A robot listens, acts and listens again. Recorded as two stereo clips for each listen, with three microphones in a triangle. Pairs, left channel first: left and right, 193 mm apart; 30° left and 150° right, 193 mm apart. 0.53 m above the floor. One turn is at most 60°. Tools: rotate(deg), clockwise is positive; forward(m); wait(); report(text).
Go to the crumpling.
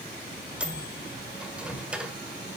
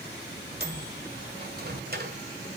wait()
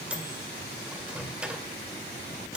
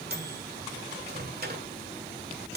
wait()
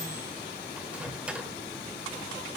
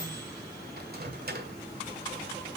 report("I can't make out crumpling to turn to.")